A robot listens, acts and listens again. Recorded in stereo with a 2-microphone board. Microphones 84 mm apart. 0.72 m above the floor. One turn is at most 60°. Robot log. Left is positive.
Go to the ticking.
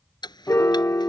note: The ticking: about 60° left or 120° left.
cmd yaw +60
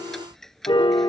cmd fwd 1.0
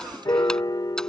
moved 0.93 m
cmd idle
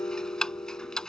note: The ticking is now 10° left.
cmd yaw +10
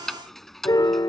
cmd fwd 1.0
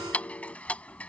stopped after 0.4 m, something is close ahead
note: The ticking is now 20° left.
cmd yaw +20
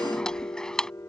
note: The ticking is now 10° left.
cmd yaw +10
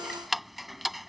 end: I am next to the ticking.